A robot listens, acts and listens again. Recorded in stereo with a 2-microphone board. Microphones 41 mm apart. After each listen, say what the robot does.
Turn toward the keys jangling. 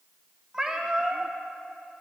Keep listening.
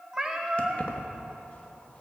Turn 35° left.
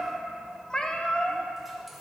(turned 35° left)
Keep listening.
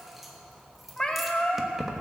Facing the keys jangling, 1 to 2 m away.